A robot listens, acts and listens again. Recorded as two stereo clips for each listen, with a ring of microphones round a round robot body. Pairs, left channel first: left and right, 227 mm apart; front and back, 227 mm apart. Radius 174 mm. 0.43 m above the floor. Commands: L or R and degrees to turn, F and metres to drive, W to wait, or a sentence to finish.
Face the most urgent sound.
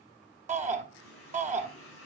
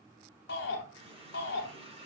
R35
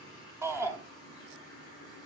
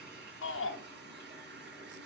R10
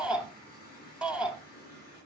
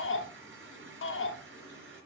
Facing the shout.